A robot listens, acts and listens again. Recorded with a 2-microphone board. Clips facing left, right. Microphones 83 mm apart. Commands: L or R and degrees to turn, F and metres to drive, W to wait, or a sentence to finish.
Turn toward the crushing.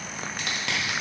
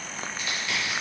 L90
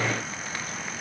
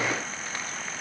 W
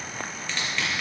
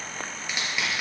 R10
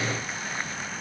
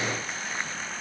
W
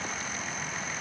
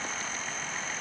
W
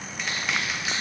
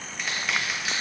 Found it: crushing, straight ahead, 1 to 2 m away.